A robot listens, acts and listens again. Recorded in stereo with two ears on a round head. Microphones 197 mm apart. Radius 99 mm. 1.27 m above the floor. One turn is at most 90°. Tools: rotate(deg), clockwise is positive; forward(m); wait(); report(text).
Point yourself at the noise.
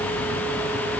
wait()
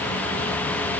wait()
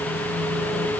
report("I can't make out anything to turn to.")